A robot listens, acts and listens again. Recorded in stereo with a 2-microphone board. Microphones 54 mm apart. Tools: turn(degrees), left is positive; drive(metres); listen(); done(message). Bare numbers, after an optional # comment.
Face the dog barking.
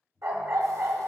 # The dog barking: about 60° right or 120° right.
turn(-60)
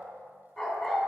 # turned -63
done("Facing the dog barking, 2 to 4 m away.")